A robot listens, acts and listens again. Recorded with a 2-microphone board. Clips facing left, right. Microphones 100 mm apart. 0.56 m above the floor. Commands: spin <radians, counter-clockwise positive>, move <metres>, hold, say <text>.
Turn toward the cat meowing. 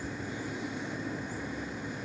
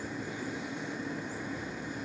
hold
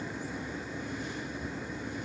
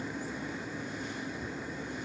hold
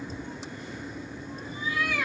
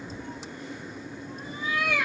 spin -1.57
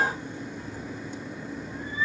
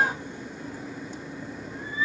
hold
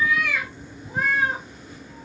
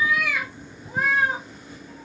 say Facing the cat meowing, 2 to 4 m away.